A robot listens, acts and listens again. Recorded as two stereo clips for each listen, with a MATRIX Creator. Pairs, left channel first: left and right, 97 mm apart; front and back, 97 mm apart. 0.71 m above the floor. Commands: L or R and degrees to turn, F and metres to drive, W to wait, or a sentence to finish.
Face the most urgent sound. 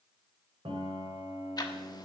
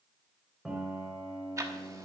W
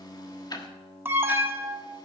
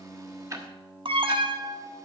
R155
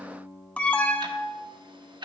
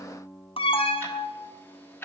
L15
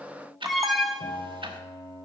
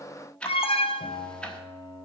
Facing the alarm, under 1 m away.